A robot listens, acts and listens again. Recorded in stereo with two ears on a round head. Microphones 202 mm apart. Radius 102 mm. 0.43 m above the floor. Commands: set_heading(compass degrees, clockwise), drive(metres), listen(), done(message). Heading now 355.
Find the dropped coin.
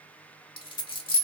set_heading(330)
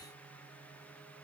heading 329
listen()
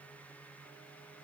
done("I heard a dropped coin, but can't make it out now. It was about straight ahead or 130° left.")